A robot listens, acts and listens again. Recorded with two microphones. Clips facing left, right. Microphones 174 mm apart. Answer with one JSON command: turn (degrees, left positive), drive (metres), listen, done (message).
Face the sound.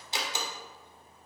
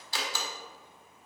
{"turn": 20}
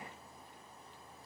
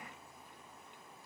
{"listen": true}
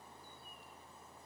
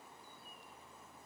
{"done": "I heard a door slam, but can't make it out now. It was about straight ahead or 140° left."}